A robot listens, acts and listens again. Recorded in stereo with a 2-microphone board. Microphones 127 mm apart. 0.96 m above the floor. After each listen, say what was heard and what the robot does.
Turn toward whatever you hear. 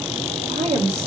The woman speaking: about 70° right or 110° right. Turn 70° right.
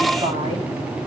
Keep listening.
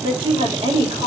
So it is at 45° right. Turn 45° right.
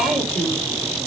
Facing the woman speaking, over 4 m away.